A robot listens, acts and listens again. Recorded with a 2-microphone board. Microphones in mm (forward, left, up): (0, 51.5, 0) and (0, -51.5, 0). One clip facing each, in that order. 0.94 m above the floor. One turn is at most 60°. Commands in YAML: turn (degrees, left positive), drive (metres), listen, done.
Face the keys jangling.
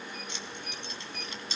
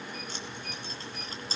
turn: -35
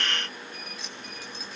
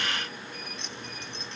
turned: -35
done: "Facing the keys jangling."